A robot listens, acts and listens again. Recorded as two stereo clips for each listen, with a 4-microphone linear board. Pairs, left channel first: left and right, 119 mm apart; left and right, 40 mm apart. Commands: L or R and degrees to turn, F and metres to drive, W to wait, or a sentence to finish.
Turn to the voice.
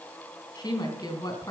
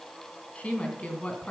L35
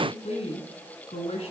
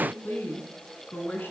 L120
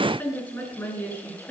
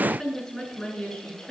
L20
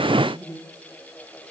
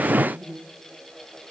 Facing the woman speaking.